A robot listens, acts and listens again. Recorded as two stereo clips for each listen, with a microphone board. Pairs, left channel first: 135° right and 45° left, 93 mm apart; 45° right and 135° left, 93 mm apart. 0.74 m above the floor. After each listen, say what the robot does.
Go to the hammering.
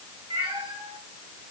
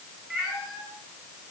Keep listening.
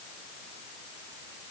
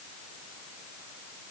Keep listening.
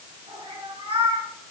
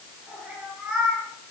I can't make out hammering, only a cat meowing.